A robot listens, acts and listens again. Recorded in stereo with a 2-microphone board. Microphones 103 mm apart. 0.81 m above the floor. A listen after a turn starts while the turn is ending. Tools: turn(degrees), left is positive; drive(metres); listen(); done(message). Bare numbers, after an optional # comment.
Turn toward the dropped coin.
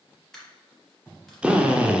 turn(30)
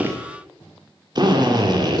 listen()
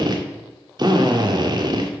done("I heard a dropped coin, but can't make it out now. It was about 25° right or 145° left.")